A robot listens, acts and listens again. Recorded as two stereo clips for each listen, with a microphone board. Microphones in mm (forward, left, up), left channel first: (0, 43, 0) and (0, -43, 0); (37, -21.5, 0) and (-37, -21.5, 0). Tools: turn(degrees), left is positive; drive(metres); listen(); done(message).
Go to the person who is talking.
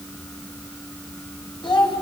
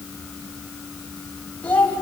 turn(degrees=70)
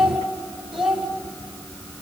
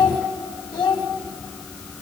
drive(metres=1.0)
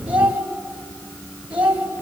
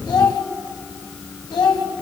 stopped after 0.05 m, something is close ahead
turn(degrees=-15)
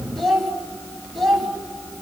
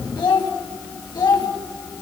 done("Something is in my way. I am facing the child speaking but have not reached it.")